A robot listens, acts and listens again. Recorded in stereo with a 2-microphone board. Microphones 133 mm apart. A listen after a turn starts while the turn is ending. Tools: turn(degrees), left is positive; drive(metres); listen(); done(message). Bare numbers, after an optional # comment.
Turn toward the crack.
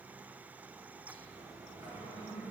listen()
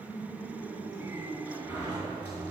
listen()
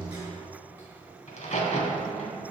# The crack: about 55° left or 125° left.
turn(55)
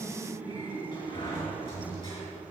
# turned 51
listen()
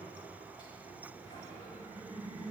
done("I heard a crack, but can't make it out now. It was about 5° left or 75° left.")